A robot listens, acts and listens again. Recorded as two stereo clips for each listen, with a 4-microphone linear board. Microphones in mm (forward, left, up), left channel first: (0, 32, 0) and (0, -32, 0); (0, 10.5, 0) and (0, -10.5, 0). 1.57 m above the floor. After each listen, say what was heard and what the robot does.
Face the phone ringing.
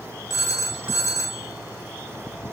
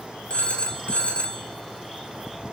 The phone ringing: about 55° left or 125° left. Turn 55° left.
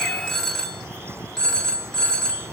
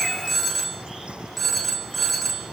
So it is at 10° left. Turn 10° left.
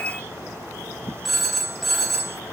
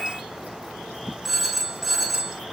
Found it: a phone ringing, straight ahead, 2 to 4 m away.